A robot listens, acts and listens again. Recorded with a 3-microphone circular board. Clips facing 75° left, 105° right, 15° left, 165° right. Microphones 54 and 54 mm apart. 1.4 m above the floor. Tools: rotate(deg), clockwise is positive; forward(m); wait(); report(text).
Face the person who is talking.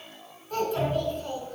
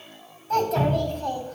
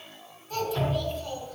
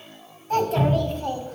rotate(115)
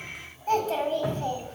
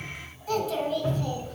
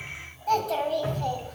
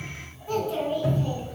rotate(-30)
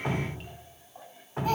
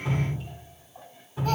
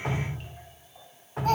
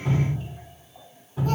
report("Found it: a child speaking, straight ahead, 2 to 4 m away.")